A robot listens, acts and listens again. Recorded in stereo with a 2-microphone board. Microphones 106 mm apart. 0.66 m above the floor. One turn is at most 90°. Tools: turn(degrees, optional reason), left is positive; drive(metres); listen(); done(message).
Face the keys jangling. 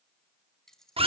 turn(degrees=30)
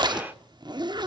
listen()
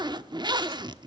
listen()
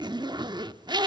done("I heard keys jangling, but can't make it out now. It was about 25° right or 145° left.")